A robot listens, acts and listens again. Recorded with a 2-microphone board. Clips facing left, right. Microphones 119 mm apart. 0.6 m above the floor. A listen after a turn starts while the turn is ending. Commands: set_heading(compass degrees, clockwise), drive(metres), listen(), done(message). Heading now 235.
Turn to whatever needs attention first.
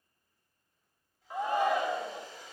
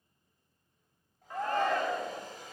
set_heading(205)
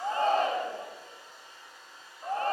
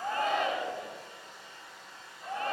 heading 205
set_heading(70)
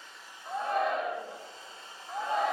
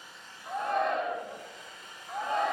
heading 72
done("Facing the shout.")